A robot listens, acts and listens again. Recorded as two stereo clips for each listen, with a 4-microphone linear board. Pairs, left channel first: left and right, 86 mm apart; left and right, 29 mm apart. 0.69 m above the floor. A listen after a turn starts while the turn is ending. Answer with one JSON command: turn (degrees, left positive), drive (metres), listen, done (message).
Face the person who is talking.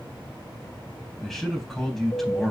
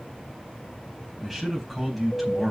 {"turn": 30}
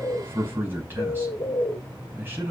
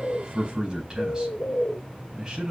{"turn": -25}
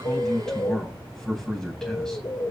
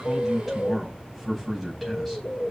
{"done": "Facing the man speaking, over 4 m away."}